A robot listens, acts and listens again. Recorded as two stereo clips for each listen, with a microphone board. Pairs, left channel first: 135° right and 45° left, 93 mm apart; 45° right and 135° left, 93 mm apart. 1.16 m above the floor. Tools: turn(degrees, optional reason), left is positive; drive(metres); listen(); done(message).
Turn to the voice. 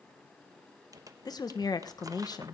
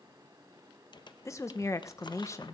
turn(degrees=-100, reason="The woman speaking: 100° right.")
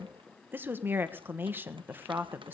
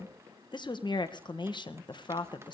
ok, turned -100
turn(degrees=-20, reason="The woman speaking is now 20° right.")
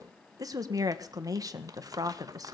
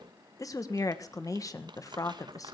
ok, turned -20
done("Found it: a woman speaking, straight ahead, 1 to 2 m away.")